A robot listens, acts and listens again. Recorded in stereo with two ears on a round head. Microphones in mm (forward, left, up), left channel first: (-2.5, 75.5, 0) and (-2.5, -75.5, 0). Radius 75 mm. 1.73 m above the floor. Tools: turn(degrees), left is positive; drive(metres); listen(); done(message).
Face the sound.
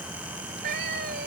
turn(degrees=-65)
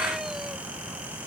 listen()
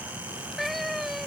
done("Facing the cat meowing.")